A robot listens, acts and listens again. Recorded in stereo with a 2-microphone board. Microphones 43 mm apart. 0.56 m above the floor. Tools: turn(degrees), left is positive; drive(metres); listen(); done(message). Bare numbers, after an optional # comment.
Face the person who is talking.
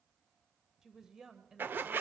turn(-30)
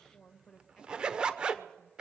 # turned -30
# So it is at 20° left.
turn(20)
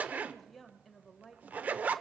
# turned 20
done("Facing the woman speaking, 1 to 2 m away.")